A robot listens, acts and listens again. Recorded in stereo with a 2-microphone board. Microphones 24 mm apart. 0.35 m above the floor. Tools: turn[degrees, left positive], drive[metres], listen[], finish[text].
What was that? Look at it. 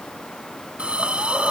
Thought: The hiss: about 65° right or 115° right.
Action: turn[-65]
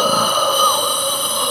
Action: finish[Facing the hiss, 1 to 2 m away.]